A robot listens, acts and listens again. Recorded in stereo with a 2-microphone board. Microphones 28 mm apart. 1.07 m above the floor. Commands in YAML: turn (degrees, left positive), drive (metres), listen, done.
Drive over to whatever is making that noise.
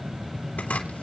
turn: 90
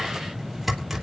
drive: 1.0
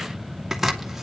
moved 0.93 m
turn: -10
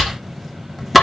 drive: 1.0
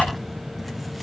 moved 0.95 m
listen: true
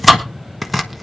drive: 1.0
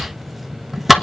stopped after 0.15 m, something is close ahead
done: "I am next to the chopping."